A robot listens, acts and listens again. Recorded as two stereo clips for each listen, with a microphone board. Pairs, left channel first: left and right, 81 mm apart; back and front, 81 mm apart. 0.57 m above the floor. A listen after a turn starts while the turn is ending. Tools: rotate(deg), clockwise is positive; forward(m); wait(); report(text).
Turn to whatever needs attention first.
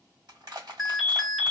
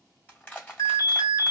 rotate(175)
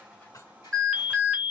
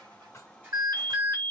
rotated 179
report("Found it: an alarm, straight ahead, 1 to 2 m away.")